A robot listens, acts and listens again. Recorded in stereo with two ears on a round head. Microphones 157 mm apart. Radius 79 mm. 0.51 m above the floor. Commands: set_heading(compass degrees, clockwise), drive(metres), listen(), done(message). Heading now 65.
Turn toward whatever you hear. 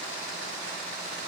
listen()
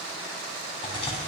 set_heading(35)
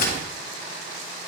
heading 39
set_heading(279)
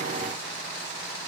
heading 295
set_heading(280)
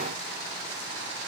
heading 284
done("I heard a crack from this way, but can't make it out now.")